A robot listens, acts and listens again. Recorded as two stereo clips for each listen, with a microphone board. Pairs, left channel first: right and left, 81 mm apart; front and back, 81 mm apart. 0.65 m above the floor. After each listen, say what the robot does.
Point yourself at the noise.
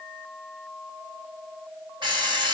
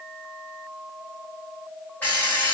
Turn 70° left.
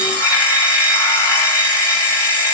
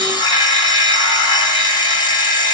Turn 25° right.
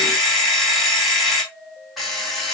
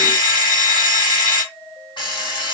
Facing the alarm clock.